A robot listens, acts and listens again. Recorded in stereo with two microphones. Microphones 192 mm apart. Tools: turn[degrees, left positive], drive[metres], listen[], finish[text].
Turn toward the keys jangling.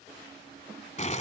Action: listen[]
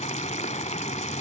Action: listen[]
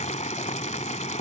Action: finish[I can't make out keys jangling to turn to.]